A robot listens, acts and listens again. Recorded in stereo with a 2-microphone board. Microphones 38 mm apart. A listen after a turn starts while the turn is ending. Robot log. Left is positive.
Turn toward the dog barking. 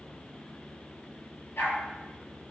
cmd yaw +90
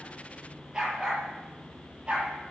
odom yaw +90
note: So it is at 25° right.
cmd yaw -25
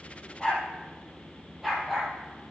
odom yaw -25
end: Facing the dog barking.